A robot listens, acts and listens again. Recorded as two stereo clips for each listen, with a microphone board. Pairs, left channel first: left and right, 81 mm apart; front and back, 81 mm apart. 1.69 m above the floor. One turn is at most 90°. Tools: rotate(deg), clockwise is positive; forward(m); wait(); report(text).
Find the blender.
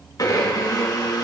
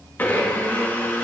rotate(-60)
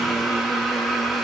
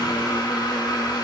report("Facing the blender, 1 to 2 m away.")